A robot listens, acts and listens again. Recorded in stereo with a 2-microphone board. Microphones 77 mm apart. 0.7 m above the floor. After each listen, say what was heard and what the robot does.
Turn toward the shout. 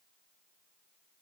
Keep listening.
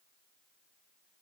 Keep listening.
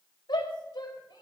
The shout: about 75° left or 105° left. Turn 75° left.
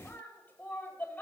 So it is at 25° left. Turn 25° left.
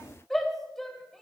Facing the shout.